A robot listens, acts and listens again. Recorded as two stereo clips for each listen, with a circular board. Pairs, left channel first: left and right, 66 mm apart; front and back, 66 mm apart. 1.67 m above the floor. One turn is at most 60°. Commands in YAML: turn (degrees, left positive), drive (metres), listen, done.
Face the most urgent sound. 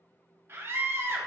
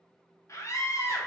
turn: -40
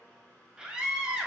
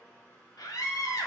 turn: -15
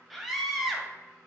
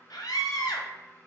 done: "Facing the scream."